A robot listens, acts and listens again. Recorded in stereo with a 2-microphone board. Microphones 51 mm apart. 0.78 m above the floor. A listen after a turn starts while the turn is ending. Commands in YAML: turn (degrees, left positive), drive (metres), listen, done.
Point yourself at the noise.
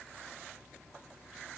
listen: true
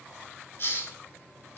turn: 45
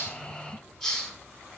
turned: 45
done: "Found it: a hiss, straight ahead."